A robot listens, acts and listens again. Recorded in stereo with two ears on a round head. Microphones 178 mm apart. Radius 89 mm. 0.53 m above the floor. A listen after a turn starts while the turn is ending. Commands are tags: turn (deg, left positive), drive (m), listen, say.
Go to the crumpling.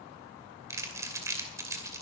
<turn deg="-15"/>
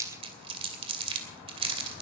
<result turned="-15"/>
<turn deg="-150"/>
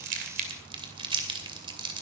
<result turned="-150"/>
<turn deg="-30"/>
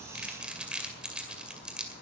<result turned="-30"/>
<drive m="1.0"/>
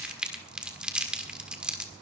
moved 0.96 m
<drive m="1.0"/>
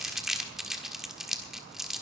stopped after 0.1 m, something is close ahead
<say>Arrived at the crumpling, straight ahead.</say>